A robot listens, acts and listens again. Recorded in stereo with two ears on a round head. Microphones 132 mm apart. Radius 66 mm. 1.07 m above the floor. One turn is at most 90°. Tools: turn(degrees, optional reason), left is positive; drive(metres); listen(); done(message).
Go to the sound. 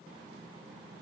listen()
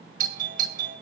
turn(degrees=-55, reason="The doorbell: about 55° right or 125° right.")
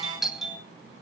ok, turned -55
drive(metres=1.0)
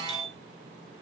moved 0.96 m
drive(metres=1.0)
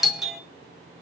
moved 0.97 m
drive(metres=1.0)
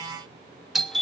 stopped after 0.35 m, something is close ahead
done("I am next to the doorbell.")